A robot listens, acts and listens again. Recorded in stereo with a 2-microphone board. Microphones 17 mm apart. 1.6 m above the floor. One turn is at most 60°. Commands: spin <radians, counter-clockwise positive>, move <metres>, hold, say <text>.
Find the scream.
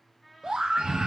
spin -0.79
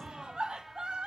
spin -1.05
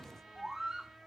spin -0.61
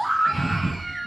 say Facing the scream, under 1 m away.